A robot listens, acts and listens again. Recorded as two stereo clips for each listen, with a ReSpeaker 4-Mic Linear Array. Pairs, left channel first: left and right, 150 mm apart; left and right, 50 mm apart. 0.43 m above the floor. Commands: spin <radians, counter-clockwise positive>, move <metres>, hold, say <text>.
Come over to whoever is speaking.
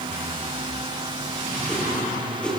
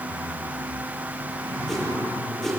hold
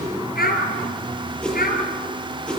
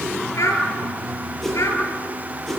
spin 1.57
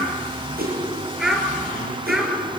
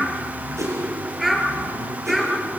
move 1.0
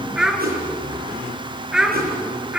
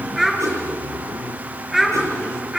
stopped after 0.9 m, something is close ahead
say Something is in my way. I am facing the child speaking but have not reached it.